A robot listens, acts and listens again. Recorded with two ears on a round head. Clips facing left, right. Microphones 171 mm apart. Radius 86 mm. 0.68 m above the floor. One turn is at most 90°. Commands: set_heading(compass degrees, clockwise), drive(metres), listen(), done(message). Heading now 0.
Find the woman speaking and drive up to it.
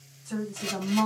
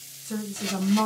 set_heading(40)
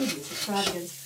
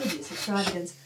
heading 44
drive(1.0)
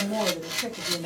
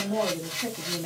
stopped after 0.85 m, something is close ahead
done("I am next to the woman speaking.")